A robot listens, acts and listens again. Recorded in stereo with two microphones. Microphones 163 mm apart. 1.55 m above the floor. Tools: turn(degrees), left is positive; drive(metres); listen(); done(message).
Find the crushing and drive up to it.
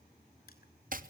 listen()
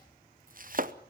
listen()
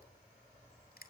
turn(degrees=65)
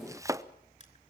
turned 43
turn(degrees=55)
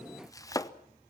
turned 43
turn(degrees=10)
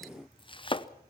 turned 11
listen()
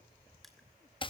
done("Facing where the crushing came from. I can't hear it now. I did not reach it.")